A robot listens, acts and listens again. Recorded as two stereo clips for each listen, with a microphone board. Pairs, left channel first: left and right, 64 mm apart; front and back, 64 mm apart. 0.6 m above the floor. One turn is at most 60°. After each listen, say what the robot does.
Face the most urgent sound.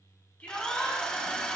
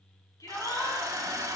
Turn 25° left.
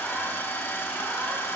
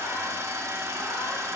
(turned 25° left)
Keep listening.
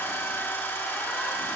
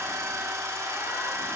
Keep listening.
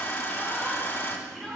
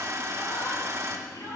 Found it: a shout, straight ahead, over 4 m away.